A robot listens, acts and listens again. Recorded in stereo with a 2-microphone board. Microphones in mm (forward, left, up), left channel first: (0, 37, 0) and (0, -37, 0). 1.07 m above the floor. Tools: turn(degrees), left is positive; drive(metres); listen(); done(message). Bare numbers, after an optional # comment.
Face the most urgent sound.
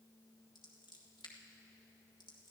listen()
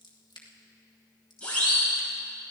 # The siren: about 15° left or 165° left.
turn(15)
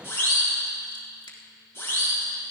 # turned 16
# So it is at 150° left.
turn(150)
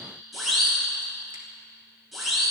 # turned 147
done("Facing the siren.")